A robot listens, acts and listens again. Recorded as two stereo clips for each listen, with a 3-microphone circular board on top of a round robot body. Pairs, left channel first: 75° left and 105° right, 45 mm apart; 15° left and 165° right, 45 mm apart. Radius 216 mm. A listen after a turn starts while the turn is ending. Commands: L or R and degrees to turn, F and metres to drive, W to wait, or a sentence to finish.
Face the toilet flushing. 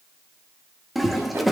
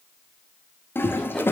R15
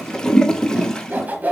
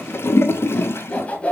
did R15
Found it: a toilet flushing, straight ahead, 1 to 2 m away.